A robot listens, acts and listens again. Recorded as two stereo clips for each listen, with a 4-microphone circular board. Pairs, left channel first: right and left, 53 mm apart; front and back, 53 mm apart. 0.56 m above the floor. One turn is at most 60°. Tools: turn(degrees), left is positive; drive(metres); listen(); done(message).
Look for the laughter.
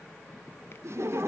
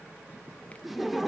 turn(degrees=60)
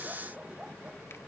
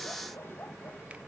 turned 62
turn(degrees=30)
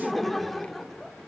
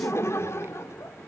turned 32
done("Found it: laughter, straight ahead, 1 to 2 m away.")